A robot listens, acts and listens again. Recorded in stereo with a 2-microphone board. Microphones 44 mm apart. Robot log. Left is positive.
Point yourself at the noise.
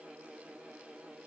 cmd idle
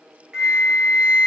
note: The flute: about 20° right or 160° right.
cmd yaw -20
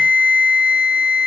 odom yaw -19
note: So it is at 140° right.
cmd yaw -140
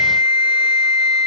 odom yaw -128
note: The flute is now 15° right.
cmd yaw -15
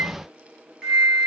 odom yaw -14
end: Found it: a flute, straight ahead.